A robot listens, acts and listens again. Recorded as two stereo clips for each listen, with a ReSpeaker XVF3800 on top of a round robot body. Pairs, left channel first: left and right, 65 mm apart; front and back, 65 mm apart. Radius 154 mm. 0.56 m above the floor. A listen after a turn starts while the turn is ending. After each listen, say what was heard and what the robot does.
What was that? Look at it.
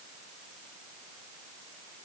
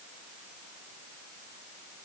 Keep listening.
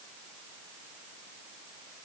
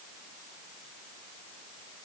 Keep listening.
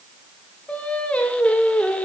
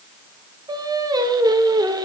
The singing: 165° left. Turn 165° left.
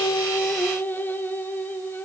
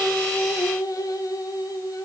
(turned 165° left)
The singing is now 30° left. Turn 30° left.
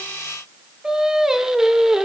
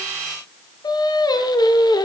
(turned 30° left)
Facing the singing.